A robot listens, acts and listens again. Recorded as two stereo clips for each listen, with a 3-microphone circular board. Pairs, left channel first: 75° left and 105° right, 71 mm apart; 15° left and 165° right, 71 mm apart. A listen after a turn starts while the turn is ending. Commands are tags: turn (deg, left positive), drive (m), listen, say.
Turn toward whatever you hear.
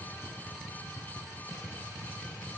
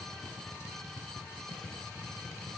<listen/>
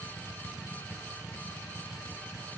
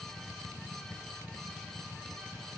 <listen/>
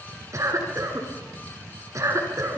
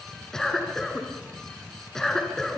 <turn deg="-65"/>
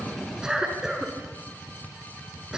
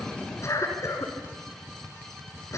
<turn deg="-25"/>
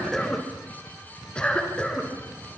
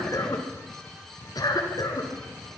<say>Facing the cough.</say>